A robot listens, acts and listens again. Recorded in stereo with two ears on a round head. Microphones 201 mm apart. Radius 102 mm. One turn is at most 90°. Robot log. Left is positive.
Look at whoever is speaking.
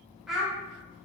cmd yaw +30
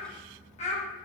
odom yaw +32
note: So it is at 150° left.
cmd yaw +90
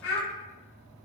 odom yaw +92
note: The child speaking is now 55° left.
cmd yaw +55
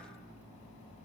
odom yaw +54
cmd idle
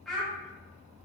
end: Facing the child speaking, under 1 m away.